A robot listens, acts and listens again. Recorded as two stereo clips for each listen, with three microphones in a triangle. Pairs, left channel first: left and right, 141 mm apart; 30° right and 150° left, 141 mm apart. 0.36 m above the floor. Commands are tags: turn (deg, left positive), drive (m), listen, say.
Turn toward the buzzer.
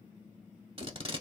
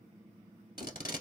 <listen/>
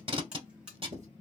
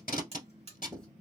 <turn deg="-170"/>
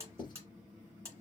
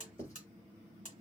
<turn deg="-20"/>
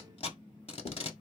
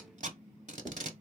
<listen/>
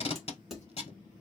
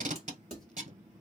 <listen/>
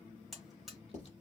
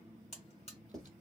<say>Facing the buzzer, 1 to 2 m away.</say>